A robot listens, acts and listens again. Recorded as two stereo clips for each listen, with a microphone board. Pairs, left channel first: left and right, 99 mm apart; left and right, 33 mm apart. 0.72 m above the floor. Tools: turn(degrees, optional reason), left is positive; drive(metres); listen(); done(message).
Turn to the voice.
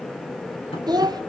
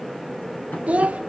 turn(degrees=-40, reason="The child speaking: about 40° right or 140° right.")
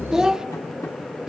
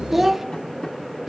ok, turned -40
done("Found it: a child speaking, straight ahead, under 1 m away.")